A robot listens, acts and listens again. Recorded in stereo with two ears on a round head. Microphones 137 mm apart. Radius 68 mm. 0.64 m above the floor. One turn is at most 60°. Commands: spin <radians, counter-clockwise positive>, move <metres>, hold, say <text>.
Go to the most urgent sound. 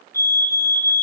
spin 0.26
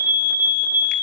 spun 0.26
spin 1.05
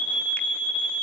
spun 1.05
spin 1.05
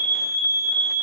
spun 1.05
spin 0.35
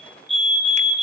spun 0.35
move 1.0
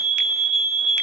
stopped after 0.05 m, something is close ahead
say Blocked. The fire alarm is further on, straight ahead.